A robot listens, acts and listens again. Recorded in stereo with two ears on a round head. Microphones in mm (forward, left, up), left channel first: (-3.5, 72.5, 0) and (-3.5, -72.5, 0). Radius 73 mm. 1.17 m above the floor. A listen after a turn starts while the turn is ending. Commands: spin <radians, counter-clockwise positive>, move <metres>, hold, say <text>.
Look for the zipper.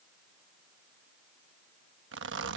spin -1.57
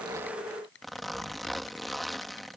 say Facing the zipper.